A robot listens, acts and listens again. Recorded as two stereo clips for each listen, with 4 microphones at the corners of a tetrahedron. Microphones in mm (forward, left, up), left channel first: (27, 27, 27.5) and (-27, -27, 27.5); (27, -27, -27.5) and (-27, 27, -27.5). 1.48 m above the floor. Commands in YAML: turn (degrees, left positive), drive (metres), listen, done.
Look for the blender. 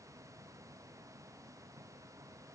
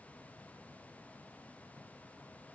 listen: true
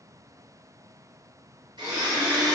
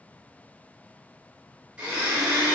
turn: -150
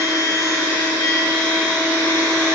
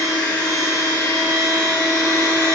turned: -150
done: "Found it: a blender, straight ahead, 1 to 2 m away."